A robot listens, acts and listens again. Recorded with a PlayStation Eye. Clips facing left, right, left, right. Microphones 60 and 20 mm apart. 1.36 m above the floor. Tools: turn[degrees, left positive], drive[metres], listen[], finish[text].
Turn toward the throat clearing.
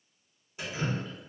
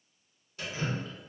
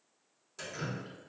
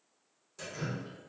Action: listen[]
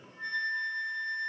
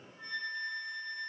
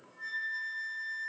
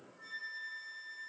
Action: listen[]
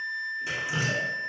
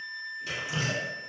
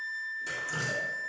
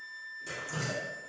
Action: finish[I can't make out throat clearing to turn to.]